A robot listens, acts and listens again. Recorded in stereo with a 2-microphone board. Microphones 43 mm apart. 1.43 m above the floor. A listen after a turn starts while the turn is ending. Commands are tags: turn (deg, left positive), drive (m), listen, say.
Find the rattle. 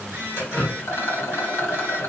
<turn deg="90"/>
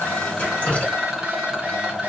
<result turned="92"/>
<turn deg="-10"/>
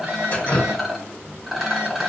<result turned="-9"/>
<say>Found it: a rattle, straight ahead, under 1 m away.</say>